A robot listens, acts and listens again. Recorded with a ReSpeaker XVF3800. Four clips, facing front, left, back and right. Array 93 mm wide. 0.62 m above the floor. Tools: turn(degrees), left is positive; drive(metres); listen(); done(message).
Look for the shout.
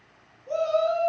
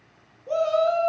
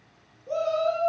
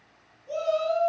turn(degrees=90)
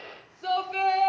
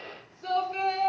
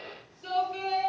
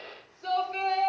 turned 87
done("Found it: a shout, straight ahead.")